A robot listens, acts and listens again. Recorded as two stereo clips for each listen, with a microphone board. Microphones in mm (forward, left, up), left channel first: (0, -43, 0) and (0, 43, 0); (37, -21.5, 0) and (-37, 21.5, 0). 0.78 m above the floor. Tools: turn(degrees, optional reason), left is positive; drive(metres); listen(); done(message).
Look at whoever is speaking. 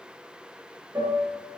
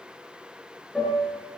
listen()
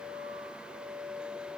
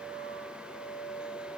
listen()
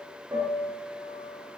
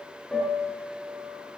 done("I can't make out anyone speaking, only a piano.")